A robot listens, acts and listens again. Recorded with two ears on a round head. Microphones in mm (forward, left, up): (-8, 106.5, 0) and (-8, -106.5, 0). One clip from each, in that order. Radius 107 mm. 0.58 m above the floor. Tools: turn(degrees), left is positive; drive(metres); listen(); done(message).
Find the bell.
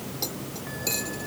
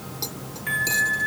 turn(degrees=-90)
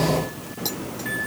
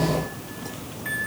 done("Found it: a bell, straight ahead.")